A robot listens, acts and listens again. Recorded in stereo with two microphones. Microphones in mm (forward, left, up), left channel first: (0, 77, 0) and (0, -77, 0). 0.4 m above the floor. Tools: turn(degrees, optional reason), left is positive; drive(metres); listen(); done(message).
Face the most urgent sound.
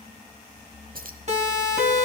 turn(degrees=-45, reason="The siren: about 45° right or 135° right.")
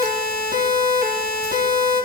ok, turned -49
turn(degrees=-80, reason="So it is at 80° right.")
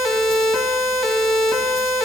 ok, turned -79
done("Facing the siren.")